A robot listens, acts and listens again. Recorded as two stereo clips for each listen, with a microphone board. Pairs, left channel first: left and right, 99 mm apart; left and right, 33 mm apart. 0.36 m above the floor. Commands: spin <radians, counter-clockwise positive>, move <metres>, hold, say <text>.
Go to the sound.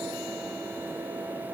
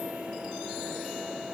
hold
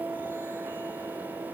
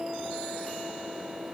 hold
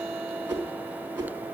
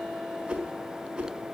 spin -0.35
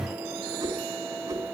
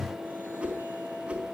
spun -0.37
spin -2.44
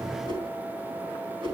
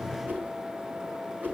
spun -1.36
spin -1.05
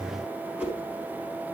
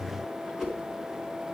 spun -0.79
spin -0.35
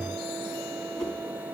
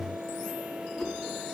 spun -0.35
move 1.0
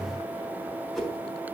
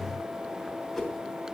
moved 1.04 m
move 1.0
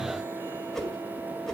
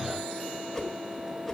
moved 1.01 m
move 1.0
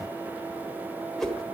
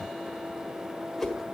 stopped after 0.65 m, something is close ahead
say I am next to the whoosh.